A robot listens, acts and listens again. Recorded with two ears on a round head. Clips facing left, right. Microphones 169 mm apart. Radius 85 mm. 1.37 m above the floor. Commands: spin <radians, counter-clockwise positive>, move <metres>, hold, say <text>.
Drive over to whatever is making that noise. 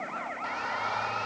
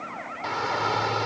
spin -1.05
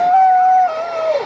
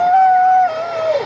move 1.0
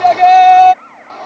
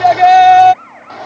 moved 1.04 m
move 1.0
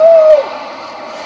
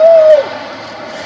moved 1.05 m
spin -0.17
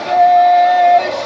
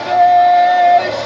move 1.0
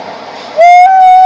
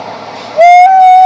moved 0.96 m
move 1.0
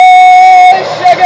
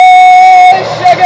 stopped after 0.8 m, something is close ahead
say I am next to the shout.